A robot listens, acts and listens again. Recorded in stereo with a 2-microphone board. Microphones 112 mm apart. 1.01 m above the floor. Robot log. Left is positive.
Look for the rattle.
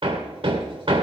cmd idle
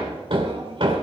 cmd idle
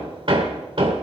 end: I can't make out a rattle to turn to.